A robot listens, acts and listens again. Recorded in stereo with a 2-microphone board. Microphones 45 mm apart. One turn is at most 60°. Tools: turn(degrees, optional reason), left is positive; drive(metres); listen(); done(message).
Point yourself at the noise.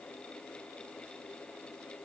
listen()
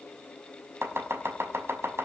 turn(degrees=-60, reason="The chopping: about 75° right or 105° right.")
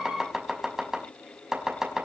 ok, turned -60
turn(degrees=-15, reason="So it is at 15° right.")
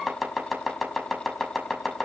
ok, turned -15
done("Facing the chopping.")